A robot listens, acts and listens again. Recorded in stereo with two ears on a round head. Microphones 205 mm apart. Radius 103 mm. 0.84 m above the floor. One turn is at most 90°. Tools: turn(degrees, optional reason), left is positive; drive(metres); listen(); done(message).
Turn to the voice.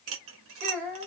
turn(degrees=-35, reason="The child speaking: about 35° right or 145° right.")
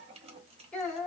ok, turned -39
done("Facing the child speaking.")